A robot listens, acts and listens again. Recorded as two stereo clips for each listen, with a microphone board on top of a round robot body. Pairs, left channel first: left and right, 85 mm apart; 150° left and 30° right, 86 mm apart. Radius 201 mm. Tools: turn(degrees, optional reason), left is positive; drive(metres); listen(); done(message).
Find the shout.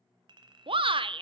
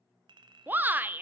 turn(degrees=-100, reason="The shout: 100° right.")
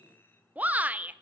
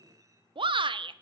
turn(degrees=-15, reason="The shout is now 15° right.")
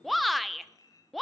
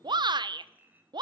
done("Found it: a shout, straight ahead, under 1 m away.")